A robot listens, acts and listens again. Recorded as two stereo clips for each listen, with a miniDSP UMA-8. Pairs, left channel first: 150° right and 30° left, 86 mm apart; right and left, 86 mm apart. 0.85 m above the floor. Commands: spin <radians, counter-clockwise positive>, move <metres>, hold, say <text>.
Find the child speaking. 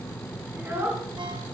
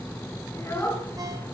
spin -0.52
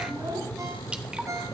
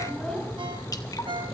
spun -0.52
say Found it: a child speaking, straight ahead, over 4 m away.